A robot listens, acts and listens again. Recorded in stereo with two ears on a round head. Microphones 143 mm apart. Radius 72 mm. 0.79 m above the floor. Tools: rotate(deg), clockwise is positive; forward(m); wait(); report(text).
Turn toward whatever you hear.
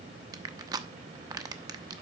rotate(25)
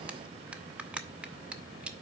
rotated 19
rotate(10)
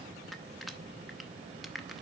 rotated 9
report("Facing the crushing, under 1 m away.")